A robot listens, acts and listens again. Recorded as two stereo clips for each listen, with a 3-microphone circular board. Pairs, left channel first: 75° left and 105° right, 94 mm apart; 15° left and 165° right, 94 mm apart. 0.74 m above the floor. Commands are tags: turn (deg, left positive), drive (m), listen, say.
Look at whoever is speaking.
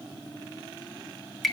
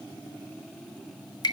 <listen/>
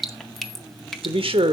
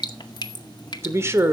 <turn deg="-100"/>
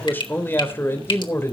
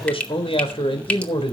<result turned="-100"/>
<turn deg="15"/>
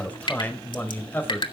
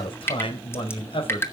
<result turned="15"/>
<say>Found it: a man speaking, straight ahead.</say>